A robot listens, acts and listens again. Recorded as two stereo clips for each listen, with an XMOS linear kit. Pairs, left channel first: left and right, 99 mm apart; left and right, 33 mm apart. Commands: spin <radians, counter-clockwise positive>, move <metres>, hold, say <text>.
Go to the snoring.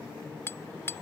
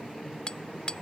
hold
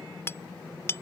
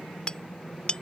hold
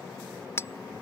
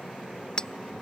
say I can't make out snoring to turn to.